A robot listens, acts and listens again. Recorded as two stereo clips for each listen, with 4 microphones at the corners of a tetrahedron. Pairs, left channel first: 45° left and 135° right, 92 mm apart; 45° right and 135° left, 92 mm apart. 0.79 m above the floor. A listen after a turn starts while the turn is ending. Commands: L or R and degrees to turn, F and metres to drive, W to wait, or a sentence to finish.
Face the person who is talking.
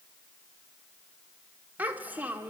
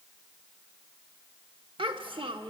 L155
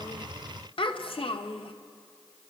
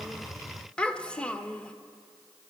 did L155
L35
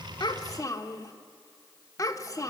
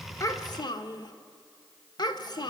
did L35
Facing the child speaking, 1 to 2 m away.